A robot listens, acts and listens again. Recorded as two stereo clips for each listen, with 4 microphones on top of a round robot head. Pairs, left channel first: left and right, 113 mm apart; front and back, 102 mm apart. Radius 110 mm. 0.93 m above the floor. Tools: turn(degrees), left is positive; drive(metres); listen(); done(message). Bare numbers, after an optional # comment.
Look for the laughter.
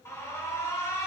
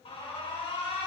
listen()
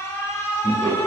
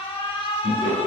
# The laughter: 175° left.
turn(175)
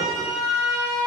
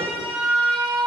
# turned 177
listen()
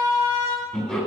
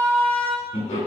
done("Facing the laughter.")